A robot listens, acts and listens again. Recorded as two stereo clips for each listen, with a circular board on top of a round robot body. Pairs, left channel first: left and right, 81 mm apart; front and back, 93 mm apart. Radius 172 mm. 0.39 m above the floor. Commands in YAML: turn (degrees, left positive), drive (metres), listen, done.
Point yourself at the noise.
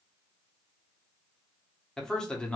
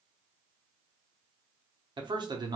turn: 165
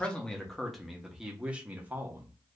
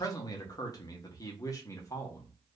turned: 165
turn: -35
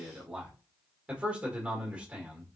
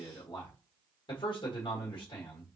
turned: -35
turn: -15
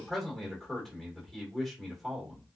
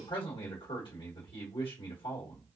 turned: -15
done: "Facing the man speaking, 1 to 2 m away."